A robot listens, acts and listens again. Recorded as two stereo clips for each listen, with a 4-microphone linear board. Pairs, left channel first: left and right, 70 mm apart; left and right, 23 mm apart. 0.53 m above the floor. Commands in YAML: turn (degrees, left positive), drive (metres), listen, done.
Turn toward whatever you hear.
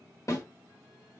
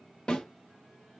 turn: 45
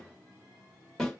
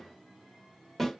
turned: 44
turn: 10
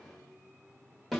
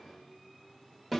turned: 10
done: "Facing the snare drum."